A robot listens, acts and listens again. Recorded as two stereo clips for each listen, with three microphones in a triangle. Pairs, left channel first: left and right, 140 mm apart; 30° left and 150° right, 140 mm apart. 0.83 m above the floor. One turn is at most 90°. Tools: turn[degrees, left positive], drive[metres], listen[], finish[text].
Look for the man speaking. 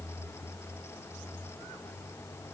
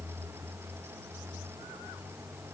Action: listen[]
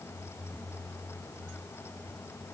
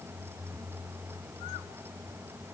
Action: listen[]
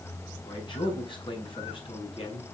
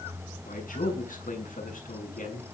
Thought: The man speaking: 40° left.
Action: turn[40]
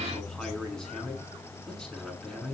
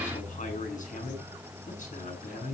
Action: finish[Found it: a man speaking, straight ahead, over 4 m away.]